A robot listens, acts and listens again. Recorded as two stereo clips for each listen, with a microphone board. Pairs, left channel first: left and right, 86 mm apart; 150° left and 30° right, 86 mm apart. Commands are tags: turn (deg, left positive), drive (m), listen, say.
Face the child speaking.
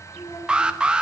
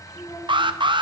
<turn deg="105"/>
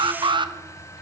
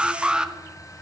<listen/>
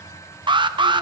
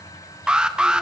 <listen/>
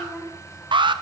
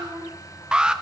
<say>Facing the child speaking.</say>